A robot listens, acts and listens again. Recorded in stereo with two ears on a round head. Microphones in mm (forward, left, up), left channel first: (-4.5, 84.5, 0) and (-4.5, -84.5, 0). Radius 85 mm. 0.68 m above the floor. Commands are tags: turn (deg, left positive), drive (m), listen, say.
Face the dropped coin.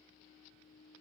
<listen/>
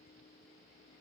<listen/>
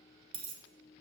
<turn deg="-30"/>
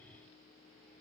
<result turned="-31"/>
<listen/>
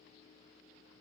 <say>I heard a dropped coin, but can't make it out now. It was about straight ahead or 120° right.</say>